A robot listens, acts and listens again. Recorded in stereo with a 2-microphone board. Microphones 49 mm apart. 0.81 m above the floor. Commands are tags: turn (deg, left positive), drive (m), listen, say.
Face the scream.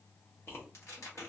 <listen/>
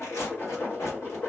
<listen/>
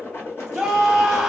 <turn deg="30"/>
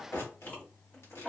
<listen/>
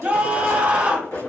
<turn deg="-25"/>
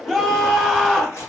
<turn deg="10"/>
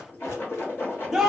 <say>Facing the scream, under 1 m away.</say>